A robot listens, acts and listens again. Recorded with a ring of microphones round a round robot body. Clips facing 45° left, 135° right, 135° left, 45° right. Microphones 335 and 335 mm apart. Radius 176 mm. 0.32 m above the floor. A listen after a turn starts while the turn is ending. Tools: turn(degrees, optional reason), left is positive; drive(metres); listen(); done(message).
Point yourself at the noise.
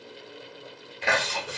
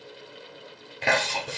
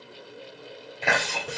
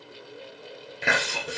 turn(degrees=-110, reason="The chewing: 110° right.")
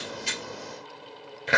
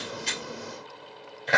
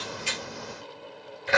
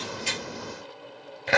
turn(degrees=-15, reason="The chewing is now 15° right.")
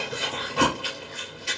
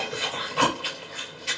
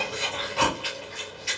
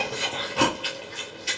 done("Found it: chewing, straight ahead, 2 to 4 m away.")